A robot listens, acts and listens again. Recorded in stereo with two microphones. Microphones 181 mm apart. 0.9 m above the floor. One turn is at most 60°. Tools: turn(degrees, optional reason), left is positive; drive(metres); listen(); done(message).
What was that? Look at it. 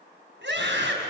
turn(degrees=-60)
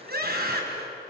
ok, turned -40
turn(degrees=-60, reason="So it is at 60° right.")
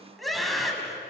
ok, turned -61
done("Facing the scream.")